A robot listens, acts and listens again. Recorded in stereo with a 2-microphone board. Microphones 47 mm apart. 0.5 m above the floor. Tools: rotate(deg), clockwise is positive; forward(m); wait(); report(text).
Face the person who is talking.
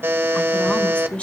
rotate(-20)
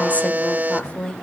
rotate(-20)
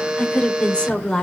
rotate(-15)
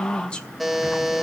rotate(-20)
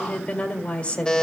rotate(-25)
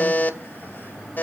wait()
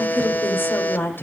rotate(-135)
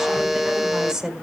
rotate(15)
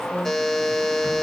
report("Facing the woman speaking.")